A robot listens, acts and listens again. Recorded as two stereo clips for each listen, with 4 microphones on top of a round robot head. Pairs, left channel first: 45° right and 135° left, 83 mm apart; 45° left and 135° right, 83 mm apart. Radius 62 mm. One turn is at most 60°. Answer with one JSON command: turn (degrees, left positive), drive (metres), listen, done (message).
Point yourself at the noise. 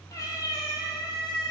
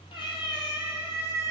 {"done": "Facing the cat meowing, 1 to 2 m away."}